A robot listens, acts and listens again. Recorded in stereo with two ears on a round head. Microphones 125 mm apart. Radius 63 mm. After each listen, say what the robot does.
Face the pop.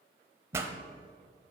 Turn 20° right.
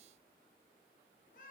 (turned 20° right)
Keep listening.
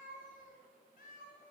I heard a pop, but can't make it out now. It was about straight ahead or 140° right.